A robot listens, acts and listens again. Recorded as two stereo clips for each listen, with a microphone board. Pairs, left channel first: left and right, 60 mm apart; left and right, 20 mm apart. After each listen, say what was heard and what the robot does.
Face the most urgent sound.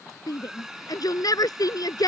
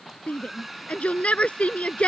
Turn 90° left.
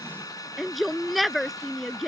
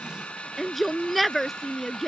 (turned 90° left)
Found it: a shout, straight ahead.